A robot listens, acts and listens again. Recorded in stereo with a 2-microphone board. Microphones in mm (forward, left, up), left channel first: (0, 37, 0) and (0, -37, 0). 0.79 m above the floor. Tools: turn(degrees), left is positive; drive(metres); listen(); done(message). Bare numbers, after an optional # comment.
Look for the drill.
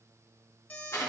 listen()
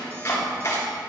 listen()
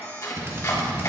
# The drill: about 35° right or 145° right.
turn(-35)
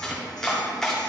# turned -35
listen()
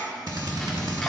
# So it is at 110° right.
turn(-110)
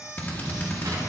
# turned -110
# The drill is now 25° left.
turn(25)
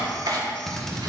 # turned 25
done("Found it: a drill, straight ahead.")